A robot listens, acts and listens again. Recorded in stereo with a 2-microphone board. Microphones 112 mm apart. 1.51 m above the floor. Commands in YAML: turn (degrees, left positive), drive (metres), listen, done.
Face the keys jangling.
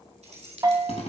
turn: -90
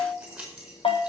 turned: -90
done: "Facing the keys jangling."